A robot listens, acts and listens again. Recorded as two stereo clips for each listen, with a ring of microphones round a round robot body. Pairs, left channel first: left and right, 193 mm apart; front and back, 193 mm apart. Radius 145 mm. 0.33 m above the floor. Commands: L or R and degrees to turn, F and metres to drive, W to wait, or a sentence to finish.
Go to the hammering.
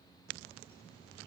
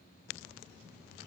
W
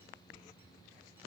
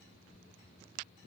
W
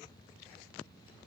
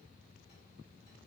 I can't make out hammering.